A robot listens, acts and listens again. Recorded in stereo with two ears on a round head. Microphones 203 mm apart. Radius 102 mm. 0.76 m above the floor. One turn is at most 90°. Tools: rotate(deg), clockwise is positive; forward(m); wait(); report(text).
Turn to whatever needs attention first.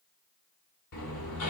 wait()
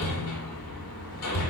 wait()
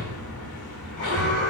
rotate(-50)
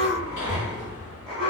report("Found it: an alarm, straight ahead, over 4 m away.")